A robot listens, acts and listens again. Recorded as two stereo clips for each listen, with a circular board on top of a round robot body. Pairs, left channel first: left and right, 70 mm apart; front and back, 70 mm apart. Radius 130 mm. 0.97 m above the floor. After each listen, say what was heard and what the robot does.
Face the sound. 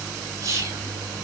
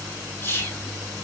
The whispering: 55° right. Turn 55° right.
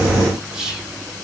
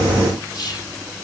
The whispering is now 15° right. Turn 15° right.
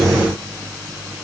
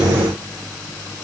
Keep listening.
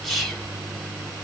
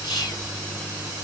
Found it: whispering, straight ahead, 2 to 4 m away.